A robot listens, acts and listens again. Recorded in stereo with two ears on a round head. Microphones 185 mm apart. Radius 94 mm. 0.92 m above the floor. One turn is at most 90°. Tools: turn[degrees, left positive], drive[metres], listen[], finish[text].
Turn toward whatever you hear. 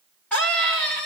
Action: turn[30]
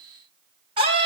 Thought: So it is at 25° right.
Action: turn[-25]
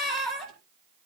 Action: finish[Facing the scream.]